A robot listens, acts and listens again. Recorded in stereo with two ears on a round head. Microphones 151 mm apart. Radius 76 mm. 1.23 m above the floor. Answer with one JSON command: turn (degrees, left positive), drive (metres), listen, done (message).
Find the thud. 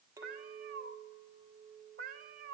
{"listen": true}
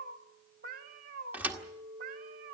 {"turn": -30}
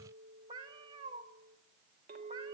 {"listen": true}
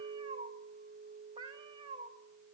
{"done": "I heard a thud, but can't make it out now. It was about 20° left or 140° right."}